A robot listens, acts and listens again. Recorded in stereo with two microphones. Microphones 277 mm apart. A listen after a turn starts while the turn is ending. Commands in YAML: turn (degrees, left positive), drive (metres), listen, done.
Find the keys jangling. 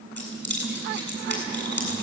turn: -45
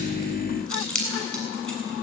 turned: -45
done: "Found it: keys jangling, straight ahead, over 4 m away."